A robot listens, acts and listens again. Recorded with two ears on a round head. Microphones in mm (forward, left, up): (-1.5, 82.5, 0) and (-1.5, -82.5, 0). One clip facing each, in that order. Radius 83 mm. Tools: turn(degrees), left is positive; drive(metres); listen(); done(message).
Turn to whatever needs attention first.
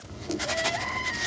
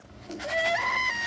turn(degrees=-65)
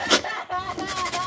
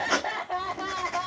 done("Facing the crying.")